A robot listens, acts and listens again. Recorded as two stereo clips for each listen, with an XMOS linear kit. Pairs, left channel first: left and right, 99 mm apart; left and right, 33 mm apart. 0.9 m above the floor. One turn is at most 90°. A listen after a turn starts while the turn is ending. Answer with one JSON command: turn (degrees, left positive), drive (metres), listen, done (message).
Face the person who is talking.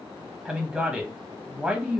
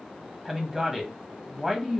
{"turn": -30}
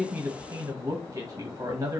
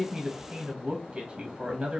{"turn": -90}
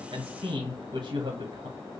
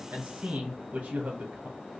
{"turn": -65}
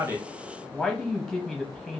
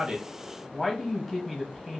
{"done": "Facing the man speaking, under 1 m away."}